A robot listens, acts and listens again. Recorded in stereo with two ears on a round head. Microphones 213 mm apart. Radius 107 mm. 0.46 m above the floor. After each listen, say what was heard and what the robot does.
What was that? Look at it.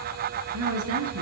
The woman speaking: about 65° right or 115° right. Turn 65° right.
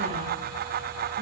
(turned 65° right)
Keep listening.
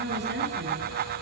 So it is at 45° right. Turn 45° right.
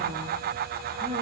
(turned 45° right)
Keep listening.
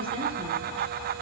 The woman speaking is now 25° right. Turn 25° right.
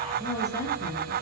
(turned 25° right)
The woman speaking is now 15° left. Turn 15° left.
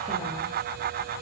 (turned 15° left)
Keep listening.
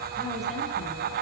Keep listening.
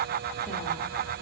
Facing where the woman speaking came from. I can't hear it now.